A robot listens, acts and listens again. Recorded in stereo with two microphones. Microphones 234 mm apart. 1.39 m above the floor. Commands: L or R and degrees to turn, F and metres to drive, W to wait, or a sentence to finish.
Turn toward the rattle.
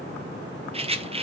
R25
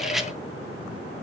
W
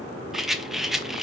Found it: a rattle, straight ahead, under 1 m away.